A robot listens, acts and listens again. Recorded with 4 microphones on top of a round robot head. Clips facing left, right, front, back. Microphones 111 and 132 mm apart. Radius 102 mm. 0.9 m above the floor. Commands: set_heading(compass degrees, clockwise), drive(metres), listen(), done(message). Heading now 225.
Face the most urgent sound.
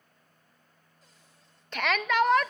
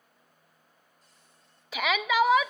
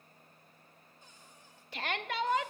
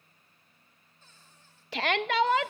set_heading(40)
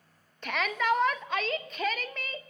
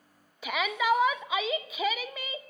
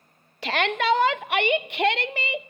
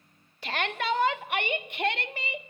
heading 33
done("Found it: a shout, straight ahead, under 1 m away.")